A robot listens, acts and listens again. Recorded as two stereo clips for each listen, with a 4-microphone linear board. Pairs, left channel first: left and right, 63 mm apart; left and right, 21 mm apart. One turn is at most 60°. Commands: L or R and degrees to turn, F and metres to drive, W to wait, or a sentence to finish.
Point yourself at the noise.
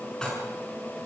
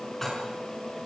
L30
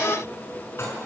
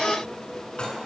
L60
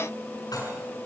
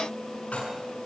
L60
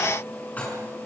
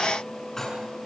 L25
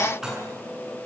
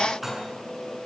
R10
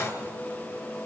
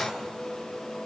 W
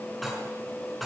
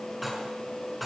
Found it: dishes clattering, straight ahead, over 4 m away.